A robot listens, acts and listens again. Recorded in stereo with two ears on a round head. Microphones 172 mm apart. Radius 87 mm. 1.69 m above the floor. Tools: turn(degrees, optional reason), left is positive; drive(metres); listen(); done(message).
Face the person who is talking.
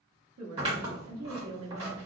turn(degrees=-90)
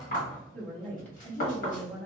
turn(degrees=10, reason="So it is at 10° left.")
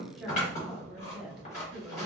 done("Found it: a woman speaking, straight ahead.")